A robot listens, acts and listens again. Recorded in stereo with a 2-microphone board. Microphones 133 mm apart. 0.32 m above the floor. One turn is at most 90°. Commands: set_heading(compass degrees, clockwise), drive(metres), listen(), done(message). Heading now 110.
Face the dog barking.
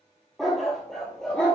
set_heading(80)
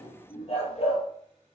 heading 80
set_heading(350)
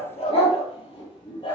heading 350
set_heading(310)
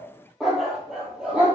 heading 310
set_heading(320)
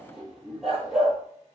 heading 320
done("Facing the dog barking, 2 to 4 m away.")